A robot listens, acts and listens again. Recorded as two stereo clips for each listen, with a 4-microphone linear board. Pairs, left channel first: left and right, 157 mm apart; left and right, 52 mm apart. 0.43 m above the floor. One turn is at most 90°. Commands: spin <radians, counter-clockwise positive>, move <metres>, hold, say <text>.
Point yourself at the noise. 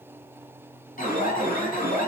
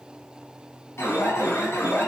spin 1.05
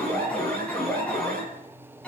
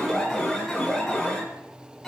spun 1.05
spin 0.17
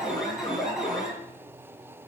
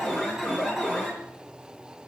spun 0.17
say Facing the alarm.